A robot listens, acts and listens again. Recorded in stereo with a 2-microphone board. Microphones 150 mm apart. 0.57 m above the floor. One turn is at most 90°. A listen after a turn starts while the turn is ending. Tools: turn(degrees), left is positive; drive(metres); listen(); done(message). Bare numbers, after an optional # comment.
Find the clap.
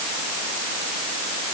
listen()
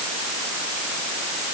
listen()
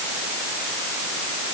done("I can't make out a clap.")